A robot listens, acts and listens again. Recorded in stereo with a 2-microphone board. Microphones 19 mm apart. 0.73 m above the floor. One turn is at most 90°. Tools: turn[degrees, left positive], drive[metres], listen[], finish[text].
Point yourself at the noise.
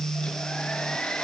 Thought: The hair dryer: about 70° left or 110° left.
Action: turn[70]
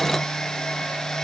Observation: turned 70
Thought: So it is at 40° left.
Action: turn[40]
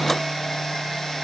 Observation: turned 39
Action: finish[Facing the hair dryer, over 4 m away.]